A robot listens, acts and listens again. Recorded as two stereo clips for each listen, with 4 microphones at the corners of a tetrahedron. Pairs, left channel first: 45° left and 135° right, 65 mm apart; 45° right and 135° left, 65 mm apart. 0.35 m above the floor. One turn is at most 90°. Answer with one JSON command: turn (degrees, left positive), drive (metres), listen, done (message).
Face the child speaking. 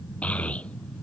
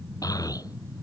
{"turn": -25}
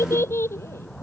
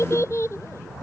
{"done": "Found it: a child speaking, straight ahead."}